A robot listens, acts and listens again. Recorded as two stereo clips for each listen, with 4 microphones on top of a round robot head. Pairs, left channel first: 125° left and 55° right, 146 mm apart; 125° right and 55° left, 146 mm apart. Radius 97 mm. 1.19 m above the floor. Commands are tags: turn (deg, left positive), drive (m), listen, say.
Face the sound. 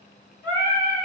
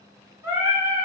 <turn deg="-165"/>
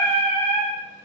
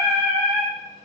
<turn deg="-25"/>
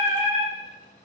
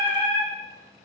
<say>Found it: singing, straight ahead.</say>